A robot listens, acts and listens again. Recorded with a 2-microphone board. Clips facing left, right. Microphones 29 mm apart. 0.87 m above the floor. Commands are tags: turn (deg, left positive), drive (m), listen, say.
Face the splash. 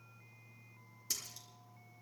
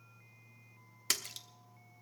<turn deg="-90"/>
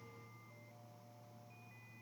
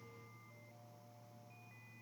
<say>I heard a splash from this way, but can't make it out now.</say>